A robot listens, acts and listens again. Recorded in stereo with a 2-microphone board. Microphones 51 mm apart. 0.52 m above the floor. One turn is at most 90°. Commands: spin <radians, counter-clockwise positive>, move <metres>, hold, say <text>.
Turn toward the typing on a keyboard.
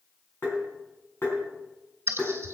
spin -0.96
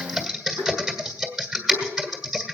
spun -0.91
say Found it: typing on a keyboard, straight ahead, 1 to 2 m away.